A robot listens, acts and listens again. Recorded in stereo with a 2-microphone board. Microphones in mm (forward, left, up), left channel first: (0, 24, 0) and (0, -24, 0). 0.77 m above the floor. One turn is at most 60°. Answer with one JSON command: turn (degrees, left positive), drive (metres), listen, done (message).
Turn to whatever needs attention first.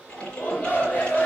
{"turn": 40}
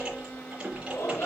{"turn": 60}
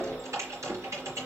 {"turn": 35}
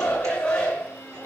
{"turn": 20}
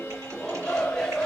{"turn": 10}
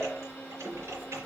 {"listen": true}
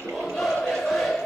{"done": "Facing the shout."}